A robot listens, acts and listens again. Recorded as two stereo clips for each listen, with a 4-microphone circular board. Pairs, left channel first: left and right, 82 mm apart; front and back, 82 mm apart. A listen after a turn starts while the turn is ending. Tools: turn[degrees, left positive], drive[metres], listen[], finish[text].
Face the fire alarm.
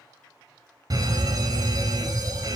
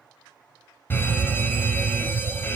Thought: The fire alarm: 60° right.
Action: turn[-60]
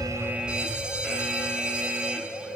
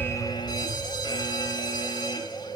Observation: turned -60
Thought: The fire alarm is now 10° right.
Action: turn[-10]
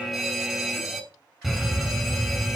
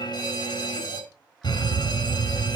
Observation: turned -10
Action: finish[Facing the fire alarm, 2 to 4 m away.]